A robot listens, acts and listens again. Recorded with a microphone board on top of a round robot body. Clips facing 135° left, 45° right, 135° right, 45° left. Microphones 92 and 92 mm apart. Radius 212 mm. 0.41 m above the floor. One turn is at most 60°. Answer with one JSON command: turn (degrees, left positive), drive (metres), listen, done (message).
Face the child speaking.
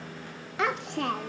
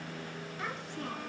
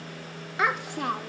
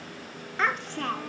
{"turn": 60}
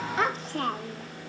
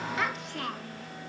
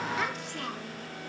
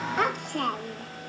{"turn": 60}
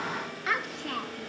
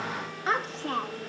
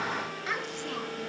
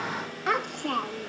{"turn": 15}
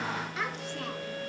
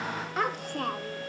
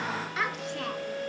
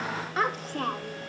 {"done": "Facing the child speaking, under 1 m away."}